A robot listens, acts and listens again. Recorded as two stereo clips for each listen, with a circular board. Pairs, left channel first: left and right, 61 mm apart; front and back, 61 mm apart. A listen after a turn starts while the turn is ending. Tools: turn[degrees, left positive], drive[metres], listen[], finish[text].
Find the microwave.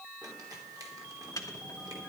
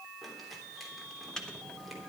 Thought: The microwave: 80° left.
Action: turn[80]
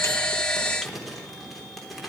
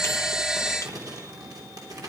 Action: listen[]
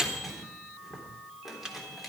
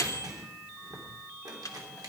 Thought: The microwave is now 10° right.
Action: turn[-10]
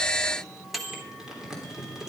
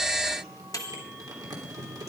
Action: finish[Found it: a microwave, straight ahead.]